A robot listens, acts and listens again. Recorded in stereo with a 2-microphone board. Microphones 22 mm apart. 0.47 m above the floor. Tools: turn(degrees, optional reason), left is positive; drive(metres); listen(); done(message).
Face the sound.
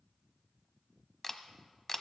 turn(degrees=15, reason="The camera shutter: about 15° left or 165° left.")
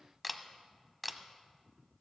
done("Facing the camera shutter.")